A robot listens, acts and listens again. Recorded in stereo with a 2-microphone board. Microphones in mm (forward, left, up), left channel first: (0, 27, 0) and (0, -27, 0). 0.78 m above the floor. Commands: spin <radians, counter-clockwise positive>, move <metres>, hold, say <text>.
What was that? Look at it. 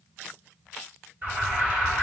spin -0.52
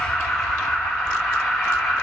say Facing the alarm, over 4 m away.